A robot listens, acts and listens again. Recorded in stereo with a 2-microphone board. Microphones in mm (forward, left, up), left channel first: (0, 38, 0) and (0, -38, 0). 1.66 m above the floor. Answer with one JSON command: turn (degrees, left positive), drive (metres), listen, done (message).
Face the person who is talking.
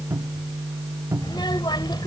{"turn": 90}
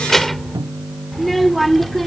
{"done": "Found it: a child speaking, straight ahead."}